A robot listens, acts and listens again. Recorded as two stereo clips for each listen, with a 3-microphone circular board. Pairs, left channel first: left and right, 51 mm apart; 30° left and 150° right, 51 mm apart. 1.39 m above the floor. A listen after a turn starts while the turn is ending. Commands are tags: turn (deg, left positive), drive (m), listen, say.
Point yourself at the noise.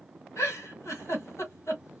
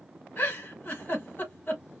<turn deg="75"/>
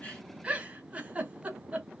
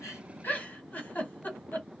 <turn deg="-25"/>
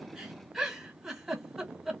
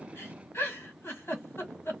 <say>Found it: a giggle, straight ahead, 1 to 2 m away.</say>